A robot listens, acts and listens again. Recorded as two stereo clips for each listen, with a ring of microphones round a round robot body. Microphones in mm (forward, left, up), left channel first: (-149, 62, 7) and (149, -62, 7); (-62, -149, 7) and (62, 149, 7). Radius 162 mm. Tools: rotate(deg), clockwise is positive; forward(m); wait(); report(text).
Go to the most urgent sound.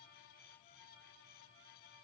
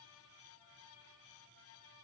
wait()
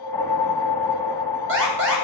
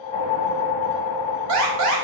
rotate(-30)
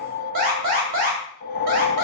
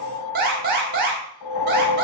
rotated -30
forward(1.0)
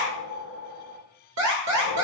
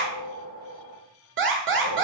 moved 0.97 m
rotate(-15)
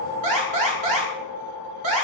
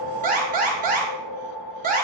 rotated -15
forward(1.0)
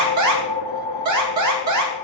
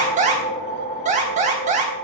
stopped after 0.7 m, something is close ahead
report("I am next to the alarm.")